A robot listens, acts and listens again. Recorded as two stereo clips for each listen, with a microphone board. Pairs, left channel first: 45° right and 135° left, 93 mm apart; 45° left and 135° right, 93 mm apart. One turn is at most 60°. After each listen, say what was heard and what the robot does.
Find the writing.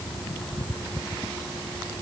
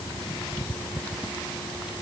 Keep listening.
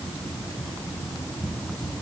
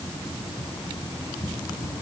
Keep listening.
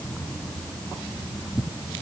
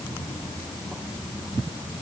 I can't make out writing to turn to.